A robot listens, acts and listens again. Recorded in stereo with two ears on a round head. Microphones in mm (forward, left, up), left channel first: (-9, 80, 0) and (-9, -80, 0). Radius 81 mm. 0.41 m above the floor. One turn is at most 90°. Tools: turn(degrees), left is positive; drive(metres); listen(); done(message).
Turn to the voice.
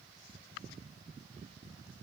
listen()
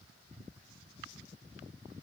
listen()
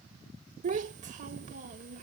turn(degrees=-45)
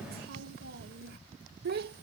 turn(degrees=-80)
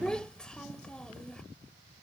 done("Found it: a child speaking, straight ahead.")